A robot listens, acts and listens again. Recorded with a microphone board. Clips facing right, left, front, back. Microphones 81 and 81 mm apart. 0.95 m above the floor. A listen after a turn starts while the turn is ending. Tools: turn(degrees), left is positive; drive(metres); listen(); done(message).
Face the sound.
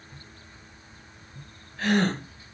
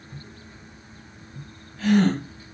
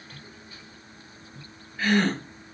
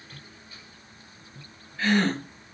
turn(degrees=-75)
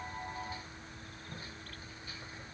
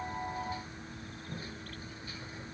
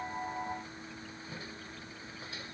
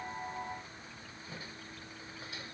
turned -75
done("Facing where the gasp came from. I can't hear it now.")